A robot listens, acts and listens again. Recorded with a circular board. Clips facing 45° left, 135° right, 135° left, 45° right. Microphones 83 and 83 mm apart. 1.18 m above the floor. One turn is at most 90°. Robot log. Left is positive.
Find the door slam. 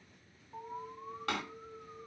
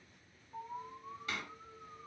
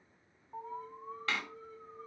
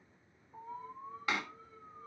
note: The door slam: 30° left.
cmd yaw +30
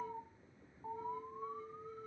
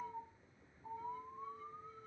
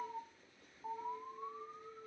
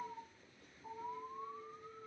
end: I heard a door slam from this way, but can't make it out now.